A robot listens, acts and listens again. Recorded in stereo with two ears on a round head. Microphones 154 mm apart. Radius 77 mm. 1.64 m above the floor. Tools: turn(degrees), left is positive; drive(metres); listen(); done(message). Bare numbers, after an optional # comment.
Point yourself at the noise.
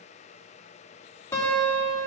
# The guitar: about 15° left or 165° left.
turn(15)
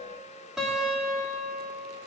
done("Found it: a guitar, straight ahead, 2 to 4 m away.")